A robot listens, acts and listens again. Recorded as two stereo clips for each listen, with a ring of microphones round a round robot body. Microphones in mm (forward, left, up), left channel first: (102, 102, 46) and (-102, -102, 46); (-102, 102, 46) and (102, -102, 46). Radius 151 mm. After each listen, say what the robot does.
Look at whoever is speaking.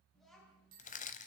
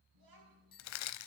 Turn 45° right.
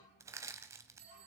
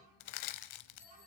Found it: a child speaking, straight ahead, over 4 m away.